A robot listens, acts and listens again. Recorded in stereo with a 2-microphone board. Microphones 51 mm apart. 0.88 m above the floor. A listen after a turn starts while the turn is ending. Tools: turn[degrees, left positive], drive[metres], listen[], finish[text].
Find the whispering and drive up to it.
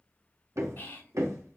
Thought: The whispering: about 50° left or 130° left.
Action: turn[50]
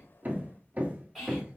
Action: drive[1.0]
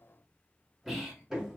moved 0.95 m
Action: listen[]
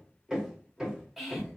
Action: drive[1.0]
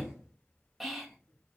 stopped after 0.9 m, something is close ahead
Action: finish[I am next to the whispering.]